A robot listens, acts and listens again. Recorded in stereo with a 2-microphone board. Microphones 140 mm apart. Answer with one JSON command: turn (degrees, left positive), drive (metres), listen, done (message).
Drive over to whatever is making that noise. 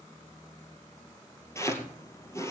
{"turn": 20}
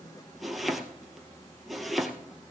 {"drive": 1.0}
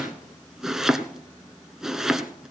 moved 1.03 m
{"drive": 1.0}
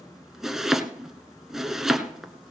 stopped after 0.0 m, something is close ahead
{"done": "Arrived at the chopping, straight ahead."}